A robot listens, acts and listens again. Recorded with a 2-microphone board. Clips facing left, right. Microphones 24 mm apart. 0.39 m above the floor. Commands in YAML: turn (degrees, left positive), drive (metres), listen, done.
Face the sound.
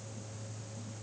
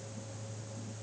listen: true
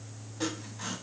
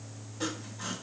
turn: 30
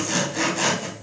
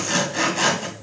turn: -20
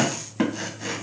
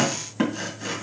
done: "Found it: sawing, straight ahead."